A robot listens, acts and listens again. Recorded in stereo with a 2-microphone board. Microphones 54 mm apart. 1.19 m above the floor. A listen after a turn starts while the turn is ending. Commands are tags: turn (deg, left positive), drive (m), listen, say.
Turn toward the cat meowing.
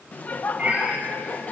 <turn deg="-25"/>
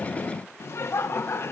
<listen/>
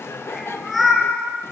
<say>Found it: a cat meowing, straight ahead.</say>